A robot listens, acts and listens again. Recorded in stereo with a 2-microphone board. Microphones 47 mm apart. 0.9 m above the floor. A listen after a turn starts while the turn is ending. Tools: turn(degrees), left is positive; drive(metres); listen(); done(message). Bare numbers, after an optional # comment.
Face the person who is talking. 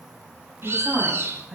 turn(-30)
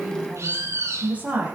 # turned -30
# So it is at 145° right.
turn(-145)
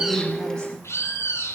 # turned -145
listen()
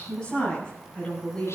# The woman speaking is now 20° left.
turn(20)
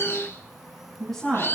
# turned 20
done("Found it: a woman speaking, straight ahead, over 4 m away.")